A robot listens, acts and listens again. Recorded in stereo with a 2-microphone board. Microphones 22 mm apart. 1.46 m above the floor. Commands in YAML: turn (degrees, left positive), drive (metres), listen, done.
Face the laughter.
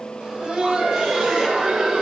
turn: -55
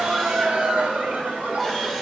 turn: -65
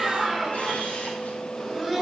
done: "Facing the laughter, over 4 m away."